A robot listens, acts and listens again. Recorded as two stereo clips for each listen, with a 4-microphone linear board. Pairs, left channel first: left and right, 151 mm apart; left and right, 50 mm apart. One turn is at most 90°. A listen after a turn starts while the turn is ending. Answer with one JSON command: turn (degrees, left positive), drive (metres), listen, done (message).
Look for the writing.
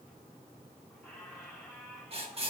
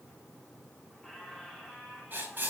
{"turn": -40}
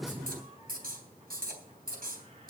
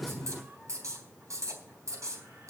{"turn": -90}
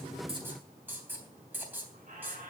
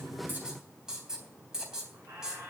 {"turn": -15}
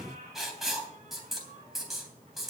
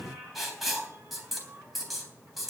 {"done": "Found it: writing, straight ahead."}